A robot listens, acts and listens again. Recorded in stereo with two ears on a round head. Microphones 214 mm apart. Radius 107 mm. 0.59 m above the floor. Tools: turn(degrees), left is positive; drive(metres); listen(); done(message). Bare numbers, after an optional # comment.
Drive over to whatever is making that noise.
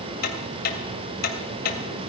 # The ticking: about 40° left or 140° left.
turn(40)
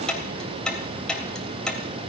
drive(1.0)
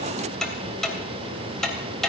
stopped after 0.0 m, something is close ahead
done("Something is in my way. I am facing the ticking but have not reached it.")